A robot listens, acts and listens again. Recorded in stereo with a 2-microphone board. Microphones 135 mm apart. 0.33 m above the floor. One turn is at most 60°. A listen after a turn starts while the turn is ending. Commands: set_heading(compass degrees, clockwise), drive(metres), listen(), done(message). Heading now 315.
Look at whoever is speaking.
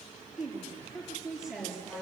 set_heading(345)
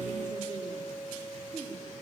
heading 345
set_heading(45)
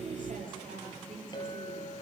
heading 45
set_heading(105)
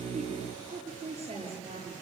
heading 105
set_heading(155)
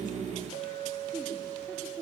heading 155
done("Found it: a woman speaking, straight ahead.")